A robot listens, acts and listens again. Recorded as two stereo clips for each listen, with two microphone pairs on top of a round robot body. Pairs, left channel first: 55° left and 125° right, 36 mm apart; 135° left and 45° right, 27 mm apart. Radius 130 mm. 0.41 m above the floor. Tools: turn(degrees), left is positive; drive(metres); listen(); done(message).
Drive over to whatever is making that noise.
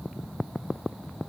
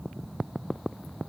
listen()
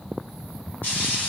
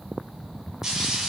turn(degrees=25)
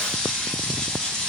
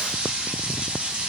turn(degrees=-25)
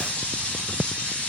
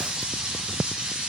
drive(metres=1.0)
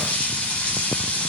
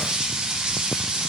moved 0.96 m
turn(degrees=10)
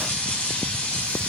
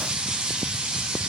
drive(metres=1.0)
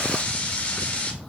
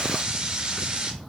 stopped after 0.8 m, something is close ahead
done("Arrived at the frying, straight ahead.")